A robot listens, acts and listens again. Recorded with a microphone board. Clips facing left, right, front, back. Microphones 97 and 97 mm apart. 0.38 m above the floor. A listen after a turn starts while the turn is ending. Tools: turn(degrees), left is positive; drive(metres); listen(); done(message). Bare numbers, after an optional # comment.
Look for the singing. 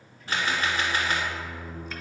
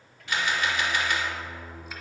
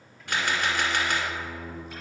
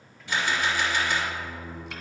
# The singing: 85° right.
turn(-85)
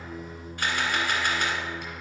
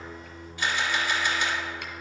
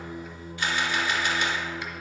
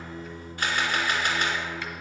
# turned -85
# The singing is now 15° left.
turn(15)
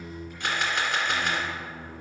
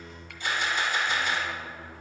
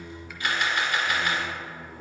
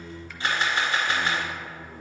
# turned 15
done("Facing the singing, 1 to 2 m away.")